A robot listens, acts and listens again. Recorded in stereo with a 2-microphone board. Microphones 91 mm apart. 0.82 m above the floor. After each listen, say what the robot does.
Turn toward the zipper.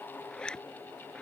Turn 30° left.
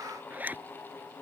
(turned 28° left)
Turn 20° right.
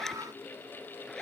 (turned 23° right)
Found it: a zipper, straight ahead.